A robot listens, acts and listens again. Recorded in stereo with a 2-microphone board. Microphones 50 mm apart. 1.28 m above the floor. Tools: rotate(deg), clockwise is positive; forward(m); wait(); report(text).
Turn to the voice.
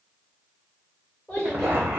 rotate(-35)
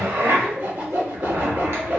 wait()
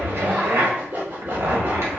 wait()
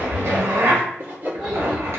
report("I heard a child speaking, but can't make it out now. It was about straight ahead or 110° left.")